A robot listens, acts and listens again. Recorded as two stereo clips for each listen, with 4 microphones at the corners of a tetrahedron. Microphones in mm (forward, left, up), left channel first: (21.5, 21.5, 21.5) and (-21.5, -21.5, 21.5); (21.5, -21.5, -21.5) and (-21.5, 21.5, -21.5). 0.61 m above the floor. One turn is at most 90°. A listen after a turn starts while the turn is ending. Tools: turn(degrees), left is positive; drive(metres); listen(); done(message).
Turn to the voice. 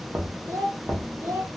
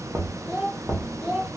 turn(degrees=-90)
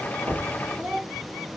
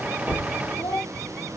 turn(degrees=-65)
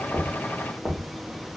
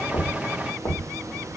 listen()
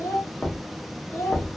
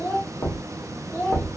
turn(degrees=15)
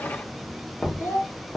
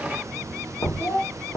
done("Facing the child speaking, 1 to 2 m away.")